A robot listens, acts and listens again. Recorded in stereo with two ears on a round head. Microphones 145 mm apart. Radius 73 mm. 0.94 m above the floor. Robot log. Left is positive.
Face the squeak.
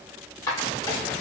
note: The squeak: about 20° left or 160° left.
cmd yaw +20
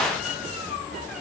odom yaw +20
cmd idle
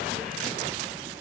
cmd idle
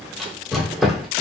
end: Found it: a squeak, straight ahead.